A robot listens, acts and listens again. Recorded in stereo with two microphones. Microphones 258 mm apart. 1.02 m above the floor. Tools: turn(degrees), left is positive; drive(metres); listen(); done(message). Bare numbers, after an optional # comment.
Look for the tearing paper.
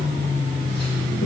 listen()
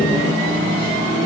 listen()
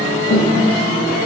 done("I can't make out tearing paper to turn to.")